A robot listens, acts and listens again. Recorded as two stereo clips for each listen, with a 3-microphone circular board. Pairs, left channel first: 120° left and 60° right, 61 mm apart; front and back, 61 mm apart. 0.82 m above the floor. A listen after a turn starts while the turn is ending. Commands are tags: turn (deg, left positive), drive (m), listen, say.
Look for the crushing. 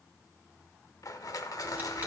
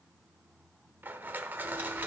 <turn deg="125"/>
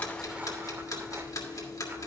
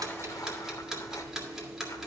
<listen/>
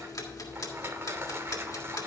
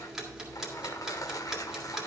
<turn deg="-10"/>
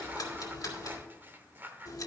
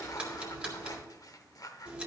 <say>Found it: crushing, straight ahead.</say>